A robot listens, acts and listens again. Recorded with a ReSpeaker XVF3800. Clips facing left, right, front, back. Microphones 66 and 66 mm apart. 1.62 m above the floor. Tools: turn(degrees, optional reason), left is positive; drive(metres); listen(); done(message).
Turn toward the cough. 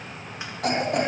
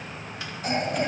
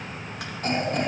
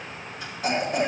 turn(degrees=100, reason="The cough: 100° left.")
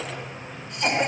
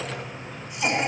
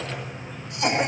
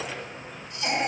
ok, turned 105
turn(degrees=-10, reason="The cough is now 10° right.")
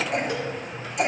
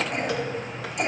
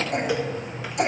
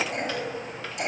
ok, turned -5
done("Found it: a cough, straight ahead.")